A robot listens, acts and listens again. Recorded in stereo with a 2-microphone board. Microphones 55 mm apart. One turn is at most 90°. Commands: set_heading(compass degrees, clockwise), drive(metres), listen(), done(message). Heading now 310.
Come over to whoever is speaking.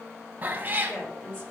set_heading(275)
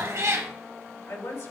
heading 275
set_heading(185)
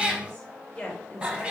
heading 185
set_heading(165)
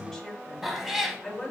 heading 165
drive(1.0)
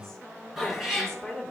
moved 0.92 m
set_heading(155)
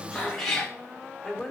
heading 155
drive(1.0)
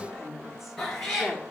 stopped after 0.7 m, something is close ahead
done("Arrived at the woman speaking, straight ahead.")